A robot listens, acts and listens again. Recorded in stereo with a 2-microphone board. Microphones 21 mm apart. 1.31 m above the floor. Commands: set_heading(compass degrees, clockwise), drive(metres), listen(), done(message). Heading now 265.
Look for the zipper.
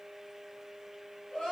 listen()
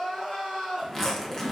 set_heading(240)
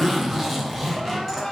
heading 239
done("Facing the zipper.")